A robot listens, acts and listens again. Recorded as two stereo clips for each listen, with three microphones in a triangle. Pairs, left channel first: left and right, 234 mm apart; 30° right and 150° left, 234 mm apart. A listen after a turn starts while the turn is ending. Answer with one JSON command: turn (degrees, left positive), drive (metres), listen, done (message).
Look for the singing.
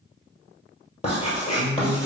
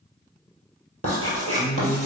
{"turn": 50}
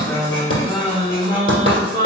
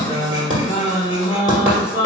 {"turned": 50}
{"turn": 50}
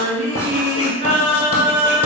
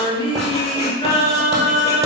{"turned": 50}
{"turn": 45}
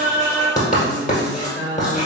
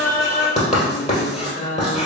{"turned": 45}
{"turn": 15}
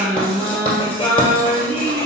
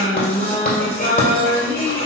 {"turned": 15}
{"done": "Facing the singing."}